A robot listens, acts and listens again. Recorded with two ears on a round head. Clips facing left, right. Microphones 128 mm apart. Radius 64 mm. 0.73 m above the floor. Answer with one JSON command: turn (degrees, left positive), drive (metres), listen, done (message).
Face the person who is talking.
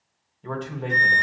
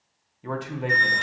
{"turn": -30}
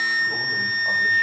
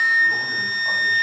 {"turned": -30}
{"listen": true}
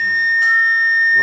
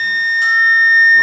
{"listen": true}
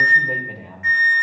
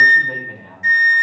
{"turn": 15}
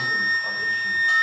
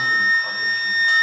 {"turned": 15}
{"listen": true}
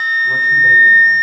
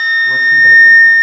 {"listen": true}
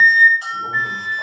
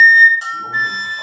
{"done": "Facing where the man speaking came from. I can't hear it now."}